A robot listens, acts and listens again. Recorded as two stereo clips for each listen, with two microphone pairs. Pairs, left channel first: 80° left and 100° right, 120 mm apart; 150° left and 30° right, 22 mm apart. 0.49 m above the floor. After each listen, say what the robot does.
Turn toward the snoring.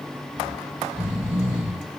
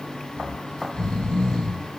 Turn 175° right.
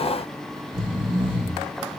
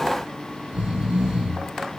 Turn 55° right.
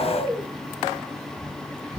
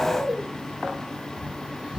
Turn 25° right.
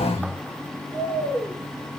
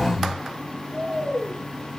Turn 15° left.
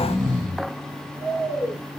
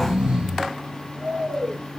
Found it: snoring, straight ahead.